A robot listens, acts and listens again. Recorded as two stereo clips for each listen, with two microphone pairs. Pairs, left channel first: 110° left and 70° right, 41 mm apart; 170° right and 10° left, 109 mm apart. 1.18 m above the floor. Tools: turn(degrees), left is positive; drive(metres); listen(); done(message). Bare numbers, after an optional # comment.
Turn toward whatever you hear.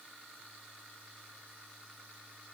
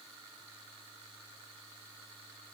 listen()
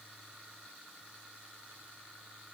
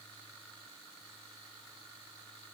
listen()
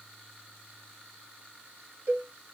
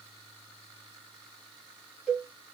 # The cowbell: 75° right.
turn(-75)
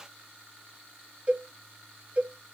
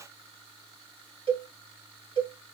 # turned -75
# The cowbell is now 25° right.
turn(-25)
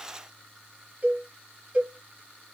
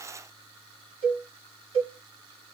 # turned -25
# The cowbell is now 20° right.
turn(-20)
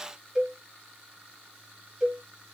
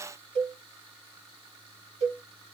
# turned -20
done("Found it: a cowbell, straight ahead.")